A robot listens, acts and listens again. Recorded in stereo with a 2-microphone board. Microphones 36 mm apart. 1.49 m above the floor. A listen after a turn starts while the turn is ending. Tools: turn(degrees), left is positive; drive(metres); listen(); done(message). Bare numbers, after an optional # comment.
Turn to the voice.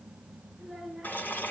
turn(30)
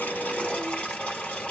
listen()
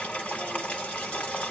listen()
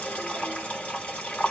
done("I heard a child speaking, but can't make it out now. It was about 30° right or 150° left.")